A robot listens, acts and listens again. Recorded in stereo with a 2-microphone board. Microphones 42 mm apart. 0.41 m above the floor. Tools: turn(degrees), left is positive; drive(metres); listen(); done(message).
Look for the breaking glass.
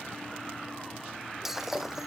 turn(degrees=-30)
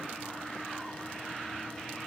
listen()
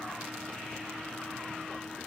done("I heard breaking glass, but can't make it out now. It was about 20° left or 140° right.")